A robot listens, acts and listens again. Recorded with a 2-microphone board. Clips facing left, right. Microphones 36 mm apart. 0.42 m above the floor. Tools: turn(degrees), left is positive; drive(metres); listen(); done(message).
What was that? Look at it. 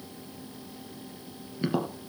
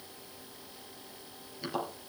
turn(degrees=25)
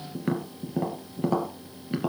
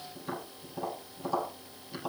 turn(degrees=130)
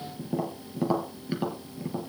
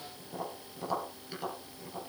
turn(degrees=25)
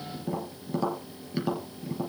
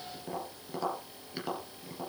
done("Found it: tapping, straight ahead, 2 to 4 m away.")